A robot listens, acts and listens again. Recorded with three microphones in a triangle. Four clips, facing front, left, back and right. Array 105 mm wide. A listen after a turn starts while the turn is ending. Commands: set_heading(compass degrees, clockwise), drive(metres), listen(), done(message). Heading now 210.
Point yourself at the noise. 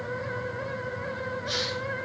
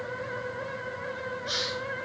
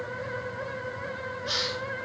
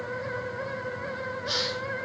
set_heading(350)
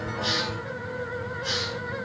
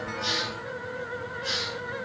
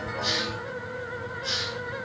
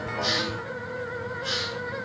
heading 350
done("Facing the hiss.")